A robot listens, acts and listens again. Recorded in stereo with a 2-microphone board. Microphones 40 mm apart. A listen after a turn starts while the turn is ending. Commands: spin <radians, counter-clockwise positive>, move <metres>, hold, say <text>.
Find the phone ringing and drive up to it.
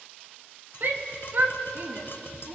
hold
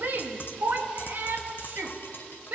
hold
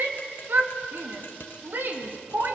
say I can't make out a phone ringing to turn to.